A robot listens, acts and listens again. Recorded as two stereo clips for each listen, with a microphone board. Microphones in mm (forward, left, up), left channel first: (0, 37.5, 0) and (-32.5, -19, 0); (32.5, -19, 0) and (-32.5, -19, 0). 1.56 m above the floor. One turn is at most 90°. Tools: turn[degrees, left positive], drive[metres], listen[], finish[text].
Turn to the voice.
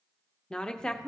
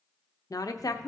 Thought: The woman speaking: 20° right.
Action: turn[-20]
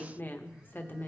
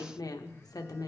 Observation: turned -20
Action: finish[Found it: a woman speaking, straight ahead, under 1 m away.]